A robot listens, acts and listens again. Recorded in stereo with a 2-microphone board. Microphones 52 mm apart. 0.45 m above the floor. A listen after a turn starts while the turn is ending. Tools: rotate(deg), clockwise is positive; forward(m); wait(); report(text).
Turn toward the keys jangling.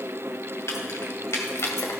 rotate(-65)
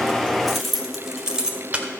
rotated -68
rotate(25)
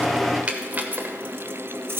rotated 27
rotate(55)
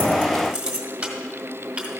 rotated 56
rotate(25)
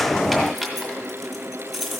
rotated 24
report("Found it: keys jangling, straight ahead.")